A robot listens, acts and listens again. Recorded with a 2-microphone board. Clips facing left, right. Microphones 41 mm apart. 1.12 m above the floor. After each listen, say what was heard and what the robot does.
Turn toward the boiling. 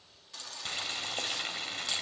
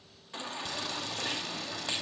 The boiling: about 40° left or 140° left. Turn 40° left.
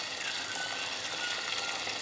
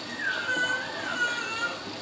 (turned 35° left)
So it is at 105° left. Turn 105° left.
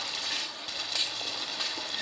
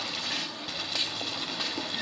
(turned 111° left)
Found it: boiling, straight ahead, over 4 m away.